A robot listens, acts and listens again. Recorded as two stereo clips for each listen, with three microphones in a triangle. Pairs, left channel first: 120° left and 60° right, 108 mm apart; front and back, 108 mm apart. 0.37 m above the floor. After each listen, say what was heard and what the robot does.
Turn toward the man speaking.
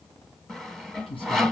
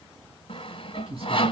The man speaking: 155° left. Turn 155° left.
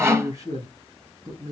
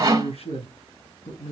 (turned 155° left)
Facing the man speaking.